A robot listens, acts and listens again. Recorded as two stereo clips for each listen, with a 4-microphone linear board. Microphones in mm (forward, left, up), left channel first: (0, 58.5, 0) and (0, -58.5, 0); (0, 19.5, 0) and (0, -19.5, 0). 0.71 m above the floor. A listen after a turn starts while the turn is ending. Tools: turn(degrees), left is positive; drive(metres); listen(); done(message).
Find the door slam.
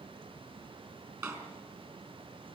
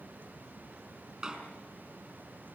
turn(degrees=-25)
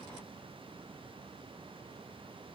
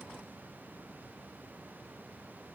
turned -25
listen()
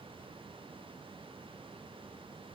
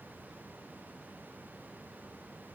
done("I heard a door slam, but can't make it out now. It was about straight ahead or 130° right.")